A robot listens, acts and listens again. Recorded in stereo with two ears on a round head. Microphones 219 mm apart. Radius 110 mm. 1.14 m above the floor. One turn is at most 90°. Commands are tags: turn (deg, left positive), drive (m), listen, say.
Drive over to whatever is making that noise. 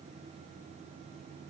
<listen/>
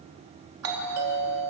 <turn deg="-70"/>
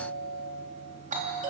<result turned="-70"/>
<turn deg="-35"/>
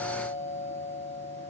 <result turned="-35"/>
<turn deg="-10"/>
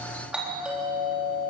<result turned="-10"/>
<drive m="1.0"/>
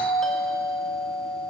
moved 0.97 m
<drive m="1.0"/>
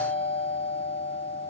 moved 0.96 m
<drive m="1.0"/>
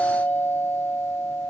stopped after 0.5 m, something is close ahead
<turn deg="10"/>
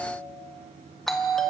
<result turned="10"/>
<say>I am next to the doorbell.</say>